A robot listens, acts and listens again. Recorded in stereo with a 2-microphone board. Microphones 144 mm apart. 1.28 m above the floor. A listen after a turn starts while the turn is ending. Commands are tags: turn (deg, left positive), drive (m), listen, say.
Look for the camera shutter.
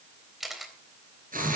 <turn deg="30"/>
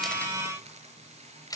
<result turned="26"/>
<turn deg="155"/>
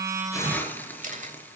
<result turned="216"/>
<turn deg="-60"/>
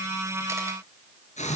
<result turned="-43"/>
<turn deg="-20"/>
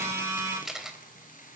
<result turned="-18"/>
<say>Facing the camera shutter.</say>